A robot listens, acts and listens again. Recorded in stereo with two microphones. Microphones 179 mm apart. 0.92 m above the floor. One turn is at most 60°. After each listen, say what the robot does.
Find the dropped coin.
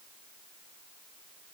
Keep listening.
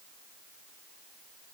Keep listening.
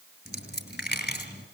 Turn 60° left.
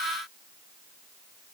Keep listening.
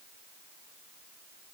I heard a dropped coin, but can't make it out now. It was about 5° left or 55° left.